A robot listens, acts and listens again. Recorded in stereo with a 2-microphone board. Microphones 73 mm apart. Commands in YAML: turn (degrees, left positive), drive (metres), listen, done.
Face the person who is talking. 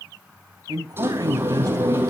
turn: -60
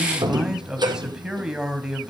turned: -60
turn: -10
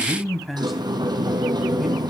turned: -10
done: "Facing the man speaking."